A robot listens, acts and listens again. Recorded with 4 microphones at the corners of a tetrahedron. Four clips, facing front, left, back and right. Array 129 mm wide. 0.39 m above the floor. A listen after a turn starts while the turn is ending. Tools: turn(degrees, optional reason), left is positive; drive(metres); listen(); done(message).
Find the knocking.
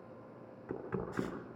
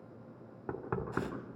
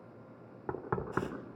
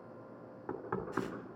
turn(degrees=165, reason="The knocking: 165° left.")
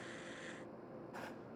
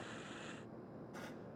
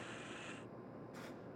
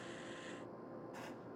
listen()
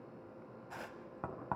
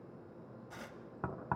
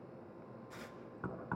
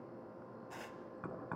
turn(degrees=45, reason="The knocking is now 45° left.")
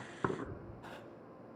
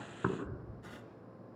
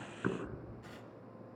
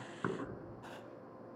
turn(degrees=15, reason="The knocking is now 15° left.")
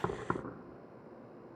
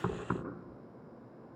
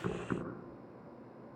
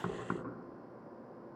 done("Facing the knocking, 2 to 4 m away.")